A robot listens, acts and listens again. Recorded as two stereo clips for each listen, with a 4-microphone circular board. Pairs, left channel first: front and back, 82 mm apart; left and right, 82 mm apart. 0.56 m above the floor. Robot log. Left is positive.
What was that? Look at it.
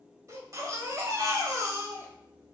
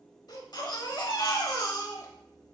note: The baby crying: 130° left.
cmd yaw +130
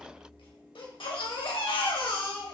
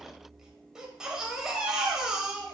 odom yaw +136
end: Facing the baby crying, under 1 m away.